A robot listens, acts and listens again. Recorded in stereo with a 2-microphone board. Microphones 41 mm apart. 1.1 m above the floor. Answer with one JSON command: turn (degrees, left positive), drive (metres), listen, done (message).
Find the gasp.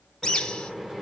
{"listen": true}
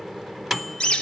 {"listen": true}
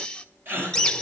{"turn": -60}
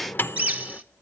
{"listen": true}
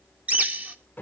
{"done": "I heard a gasp, but can't make it out now. It was about straight ahead or 60° right."}